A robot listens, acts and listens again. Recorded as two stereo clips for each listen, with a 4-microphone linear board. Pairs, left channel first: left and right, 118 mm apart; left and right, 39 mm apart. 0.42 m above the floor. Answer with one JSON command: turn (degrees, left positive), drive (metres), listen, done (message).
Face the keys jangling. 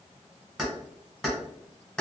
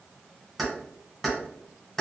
{"turn": 30}
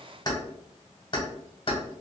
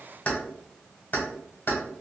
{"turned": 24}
{"turn": 135}
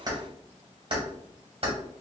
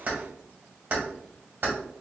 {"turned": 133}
{"turn": -50}
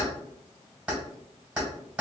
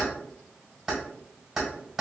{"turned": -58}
{"turn": -10}
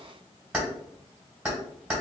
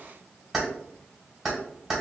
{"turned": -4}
{"turn": -10}
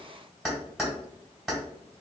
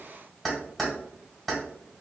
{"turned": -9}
{"done": "Found it: keys jangling, straight ahead, 1 to 2 m away."}